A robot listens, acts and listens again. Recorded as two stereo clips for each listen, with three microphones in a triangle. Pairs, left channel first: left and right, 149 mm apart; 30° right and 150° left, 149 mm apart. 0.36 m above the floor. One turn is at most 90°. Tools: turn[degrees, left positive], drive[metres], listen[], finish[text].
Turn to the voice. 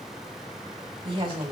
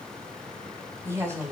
Thought: The woman speaking: 140° right.
Action: turn[-90]
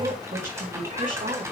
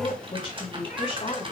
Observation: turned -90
Thought: The woman speaking is now 75° right.
Action: turn[-75]
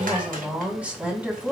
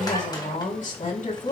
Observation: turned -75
Thought: The woman speaking is now 10° right.
Action: turn[-10]
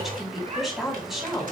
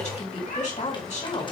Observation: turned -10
Action: finish[Facing the woman speaking.]